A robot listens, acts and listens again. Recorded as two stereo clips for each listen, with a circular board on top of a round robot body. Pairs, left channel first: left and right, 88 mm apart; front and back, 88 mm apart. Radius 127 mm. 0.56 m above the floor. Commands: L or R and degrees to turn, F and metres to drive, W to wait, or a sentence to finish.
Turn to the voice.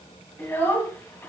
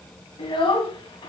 L20
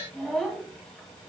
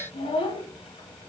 Facing the child speaking.